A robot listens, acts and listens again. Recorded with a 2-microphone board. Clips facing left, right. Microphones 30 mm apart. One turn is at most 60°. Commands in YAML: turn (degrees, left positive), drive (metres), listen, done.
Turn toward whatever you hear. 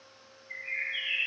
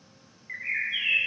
turn: -60
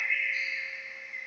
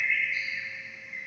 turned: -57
turn: -20
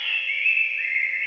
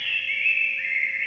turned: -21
done: "Facing the bird, under 1 m away."